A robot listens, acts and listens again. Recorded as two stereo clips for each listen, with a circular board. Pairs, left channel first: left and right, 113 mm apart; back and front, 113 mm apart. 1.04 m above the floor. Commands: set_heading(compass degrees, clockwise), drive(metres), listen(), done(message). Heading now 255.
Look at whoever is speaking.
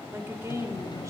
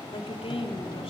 set_heading(45)
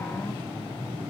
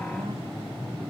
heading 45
listen()
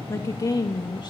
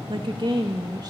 set_heading(0)
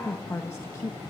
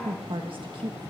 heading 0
set_heading(325)
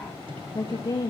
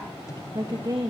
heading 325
set_heading(275)
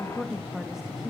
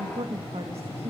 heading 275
done("Facing the woman speaking.")